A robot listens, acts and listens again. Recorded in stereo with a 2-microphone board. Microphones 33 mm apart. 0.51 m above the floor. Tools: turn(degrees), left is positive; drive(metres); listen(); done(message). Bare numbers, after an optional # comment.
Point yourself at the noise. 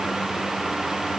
listen()
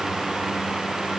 listen()
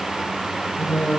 # The singing: about 50° left or 130° left.
turn(50)
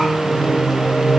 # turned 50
done("Found it: singing, straight ahead, 1 to 2 m away.")